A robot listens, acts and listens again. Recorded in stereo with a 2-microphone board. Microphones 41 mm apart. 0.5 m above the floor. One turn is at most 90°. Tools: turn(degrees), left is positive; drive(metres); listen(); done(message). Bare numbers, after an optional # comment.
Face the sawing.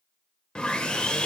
# The sawing: about 25° left or 155° left.
turn(25)
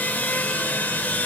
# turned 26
# So it is at 130° left.
turn(90)
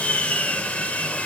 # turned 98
# The sawing is now 35° left.
turn(35)
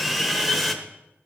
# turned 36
done("Facing the sawing.")